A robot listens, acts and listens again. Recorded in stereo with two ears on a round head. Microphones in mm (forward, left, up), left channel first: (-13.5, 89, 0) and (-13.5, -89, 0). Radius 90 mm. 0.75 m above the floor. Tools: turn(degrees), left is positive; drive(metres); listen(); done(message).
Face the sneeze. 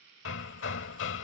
listen()
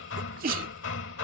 turn(degrees=-45)
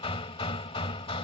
listen()
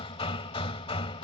done("I heard a sneeze, but can't make it out now. It was about straight ahead or 90° right.")